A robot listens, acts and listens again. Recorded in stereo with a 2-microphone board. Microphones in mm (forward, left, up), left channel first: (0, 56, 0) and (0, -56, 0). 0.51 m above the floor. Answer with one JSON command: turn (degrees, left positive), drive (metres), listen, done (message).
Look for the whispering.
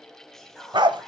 {"turn": 30}
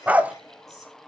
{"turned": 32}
{"listen": true}
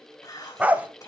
{"turn": 145}
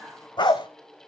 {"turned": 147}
{"done": "Found it: whispering, straight ahead."}